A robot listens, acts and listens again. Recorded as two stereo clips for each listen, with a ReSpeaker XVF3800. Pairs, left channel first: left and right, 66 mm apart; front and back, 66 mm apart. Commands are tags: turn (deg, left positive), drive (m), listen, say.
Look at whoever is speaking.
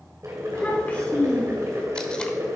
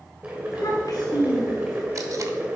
<turn deg="25"/>
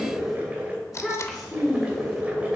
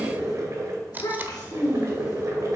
<turn deg="10"/>
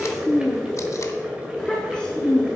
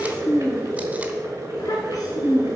<turn deg="15"/>
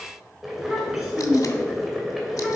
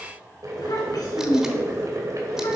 <say>Facing the child speaking, 2 to 4 m away.</say>